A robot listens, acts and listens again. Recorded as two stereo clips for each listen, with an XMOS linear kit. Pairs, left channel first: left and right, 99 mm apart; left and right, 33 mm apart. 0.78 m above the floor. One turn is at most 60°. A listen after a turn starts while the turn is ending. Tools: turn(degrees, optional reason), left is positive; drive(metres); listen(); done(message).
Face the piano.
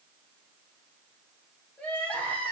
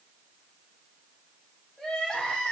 listen()
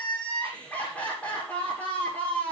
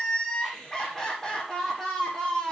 listen()
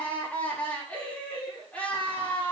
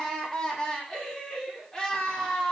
done("I can't make out a piano, only crying.")